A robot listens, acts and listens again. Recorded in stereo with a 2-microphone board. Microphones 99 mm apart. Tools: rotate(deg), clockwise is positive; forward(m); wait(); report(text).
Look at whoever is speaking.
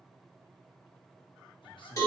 rotate(-55)
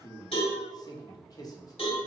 rotate(-50)
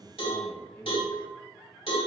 rotate(-20)
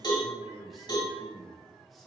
report("Found it: a man speaking, straight ahead, under 1 m away.")